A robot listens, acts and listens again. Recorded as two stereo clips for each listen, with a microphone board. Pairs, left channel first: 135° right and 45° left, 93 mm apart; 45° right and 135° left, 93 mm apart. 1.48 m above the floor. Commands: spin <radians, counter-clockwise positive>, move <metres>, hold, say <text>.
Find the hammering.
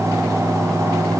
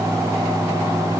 hold
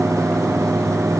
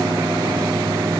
hold
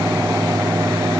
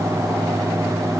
say I can't make out hammering to turn to.